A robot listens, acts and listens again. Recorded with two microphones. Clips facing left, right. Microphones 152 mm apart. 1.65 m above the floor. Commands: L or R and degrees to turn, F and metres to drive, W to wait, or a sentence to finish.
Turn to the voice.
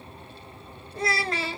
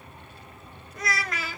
L30
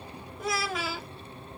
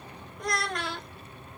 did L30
Facing the child speaking.